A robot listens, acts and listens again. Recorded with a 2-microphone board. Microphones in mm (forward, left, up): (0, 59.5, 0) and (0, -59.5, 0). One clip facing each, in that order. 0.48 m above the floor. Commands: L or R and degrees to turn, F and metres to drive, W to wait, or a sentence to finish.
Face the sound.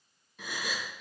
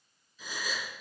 L65
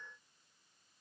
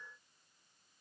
W
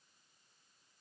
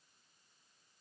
I heard a gasp, but can't make it out now. It was about straight ahead or 50° left.